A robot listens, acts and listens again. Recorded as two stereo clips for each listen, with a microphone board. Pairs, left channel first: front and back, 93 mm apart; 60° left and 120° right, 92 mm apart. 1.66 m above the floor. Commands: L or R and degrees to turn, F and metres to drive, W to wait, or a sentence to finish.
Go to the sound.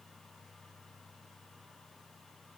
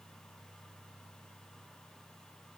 W
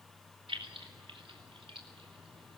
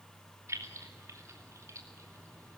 R175
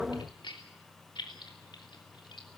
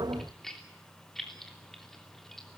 R25
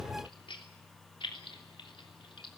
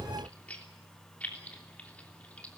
R15
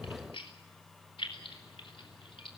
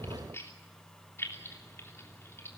F1.0
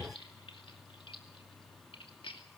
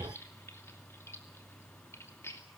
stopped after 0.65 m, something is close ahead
Something is in my way. I am facing the keys jangling but have not reached it.